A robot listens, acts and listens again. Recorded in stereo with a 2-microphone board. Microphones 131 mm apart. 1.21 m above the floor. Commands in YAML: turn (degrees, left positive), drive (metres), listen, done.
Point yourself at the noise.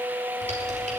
turn: -60
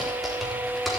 done: "Found it: typing on a keyboard, straight ahead, over 4 m away."